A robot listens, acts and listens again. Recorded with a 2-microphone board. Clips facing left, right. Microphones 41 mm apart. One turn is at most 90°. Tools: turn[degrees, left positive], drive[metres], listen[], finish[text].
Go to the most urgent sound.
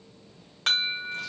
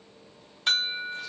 Thought: The alarm: about 70° left or 110° left.
Action: turn[70]
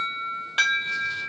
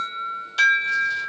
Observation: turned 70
Thought: So it is at 40° left.
Action: turn[40]
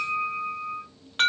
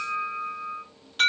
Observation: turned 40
Thought: The alarm is now 35° left.
Action: turn[35]
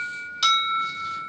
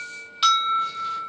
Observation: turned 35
Thought: The alarm is now 15° right.
Action: turn[-15]
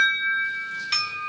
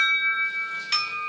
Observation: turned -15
Action: drive[1.0]
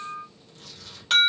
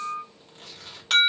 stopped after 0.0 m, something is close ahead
Action: finish[Something is in my way. I am facing the alarm but have not reached it.]